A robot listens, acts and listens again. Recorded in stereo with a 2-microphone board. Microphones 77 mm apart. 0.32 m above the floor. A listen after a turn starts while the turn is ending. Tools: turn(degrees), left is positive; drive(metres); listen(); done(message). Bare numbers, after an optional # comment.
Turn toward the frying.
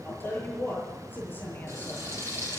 # The frying: about 35° right or 145° right.
turn(-35)
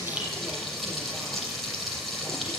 done("Facing the frying, over 4 m away.")